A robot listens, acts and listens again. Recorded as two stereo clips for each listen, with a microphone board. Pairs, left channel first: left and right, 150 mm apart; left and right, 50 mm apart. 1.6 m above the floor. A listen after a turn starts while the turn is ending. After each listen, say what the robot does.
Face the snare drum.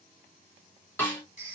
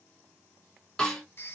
Turn 30° left.
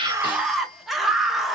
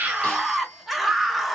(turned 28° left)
Keep listening.
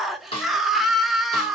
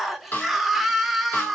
Turn 135° left.
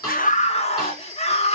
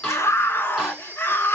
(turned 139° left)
Keep listening.
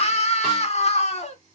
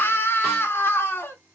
Keep listening.
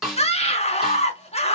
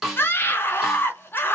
Facing the snare drum, 1 to 2 m away.